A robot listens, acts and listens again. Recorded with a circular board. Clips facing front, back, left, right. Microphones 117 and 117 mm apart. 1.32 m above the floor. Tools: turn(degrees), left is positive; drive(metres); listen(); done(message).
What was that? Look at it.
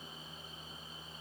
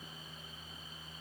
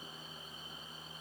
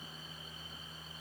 listen()
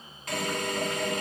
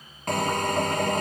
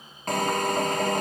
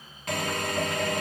turn(degrees=140)
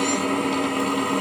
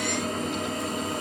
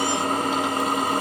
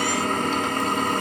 turn(degrees=15)
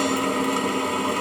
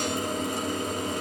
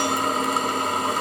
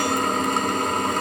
done("Found it: a drill, straight ahead, over 4 m away.")